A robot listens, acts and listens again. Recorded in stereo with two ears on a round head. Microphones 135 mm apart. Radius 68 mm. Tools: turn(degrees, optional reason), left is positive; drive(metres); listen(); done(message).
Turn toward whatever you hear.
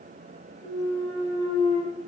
turn(degrees=-30, reason="The clunk: about 30° right or 150° right.")
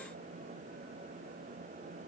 listen()
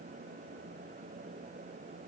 done("I heard a clunk, but can't make it out now. It was about straight ahead or 120° right.")